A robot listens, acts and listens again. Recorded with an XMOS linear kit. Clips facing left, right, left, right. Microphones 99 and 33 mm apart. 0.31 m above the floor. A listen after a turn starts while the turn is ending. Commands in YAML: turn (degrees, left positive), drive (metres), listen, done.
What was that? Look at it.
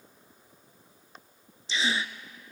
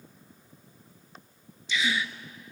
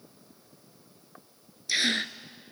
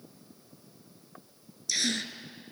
turn: 35
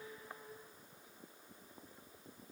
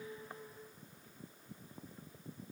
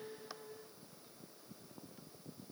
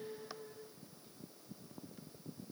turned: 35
listen: true
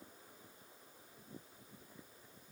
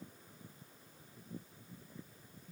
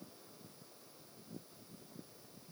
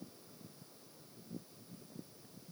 done: "I heard a gasp, but can't make it out now. It was about straight ahead or 110° left."